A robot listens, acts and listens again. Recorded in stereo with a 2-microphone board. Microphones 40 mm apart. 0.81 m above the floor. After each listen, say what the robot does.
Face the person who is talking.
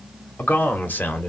Turn 45° left.
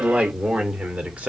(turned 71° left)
Turn 35° right.
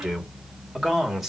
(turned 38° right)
Turn 10° right.
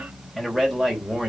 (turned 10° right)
Found it: a man speaking, straight ahead, 2 to 4 m away.